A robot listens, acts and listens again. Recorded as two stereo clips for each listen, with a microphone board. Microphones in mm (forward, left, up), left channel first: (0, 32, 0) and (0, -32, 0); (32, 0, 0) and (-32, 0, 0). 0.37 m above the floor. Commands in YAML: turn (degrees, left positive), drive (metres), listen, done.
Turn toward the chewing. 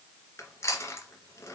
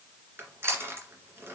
turn: 135
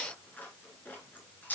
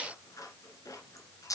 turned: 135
turn: 30
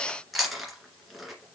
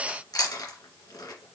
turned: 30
done: "Found it: chewing, straight ahead, 2 to 4 m away."